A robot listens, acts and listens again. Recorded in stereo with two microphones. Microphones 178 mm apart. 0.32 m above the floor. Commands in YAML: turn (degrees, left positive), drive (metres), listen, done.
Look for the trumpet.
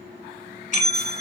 listen: true
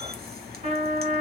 turn: -40
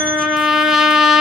done: "Found it: a trumpet, straight ahead."